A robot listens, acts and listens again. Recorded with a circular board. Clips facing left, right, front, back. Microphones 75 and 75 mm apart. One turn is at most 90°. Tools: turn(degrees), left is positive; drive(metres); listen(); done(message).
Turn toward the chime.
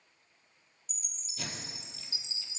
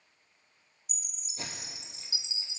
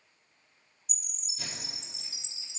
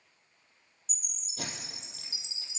turn(degrees=-20)
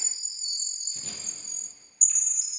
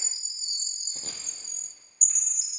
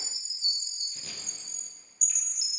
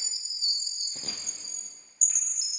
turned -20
done("Found it: a chime, straight ahead.")